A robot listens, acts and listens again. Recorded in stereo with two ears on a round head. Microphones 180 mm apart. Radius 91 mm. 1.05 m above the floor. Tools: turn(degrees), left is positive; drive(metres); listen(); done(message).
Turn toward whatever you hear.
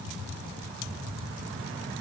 listen()
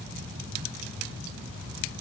listen()
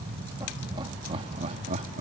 turn(degrees=-35)
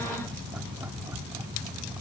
listen()
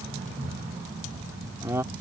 turn(degrees=-10)
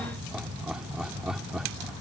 done("Facing the laughter.")